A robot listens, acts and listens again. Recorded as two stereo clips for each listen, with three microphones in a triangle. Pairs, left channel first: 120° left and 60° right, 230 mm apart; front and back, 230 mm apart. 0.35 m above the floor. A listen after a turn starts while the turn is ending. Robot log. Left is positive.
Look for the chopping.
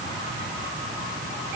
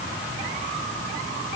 cmd idle
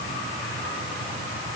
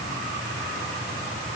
cmd idle
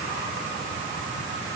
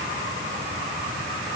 end: I can't make out chopping.